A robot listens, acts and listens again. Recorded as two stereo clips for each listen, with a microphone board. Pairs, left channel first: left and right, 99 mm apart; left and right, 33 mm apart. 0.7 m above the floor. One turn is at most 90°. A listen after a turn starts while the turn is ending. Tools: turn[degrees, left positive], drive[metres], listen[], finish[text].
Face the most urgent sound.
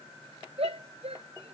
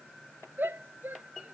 Action: turn[-90]
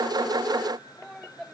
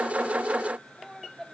Action: finish[Found it: a shout, straight ahead.]